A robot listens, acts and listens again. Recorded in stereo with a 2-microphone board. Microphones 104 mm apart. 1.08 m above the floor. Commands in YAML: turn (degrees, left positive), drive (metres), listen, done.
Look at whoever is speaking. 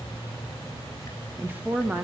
turn: -15
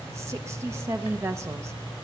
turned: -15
turn: -150
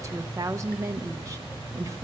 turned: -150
turn: -40
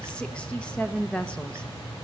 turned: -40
turn: 15
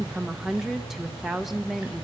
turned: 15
done: "Facing the woman speaking, under 1 m away."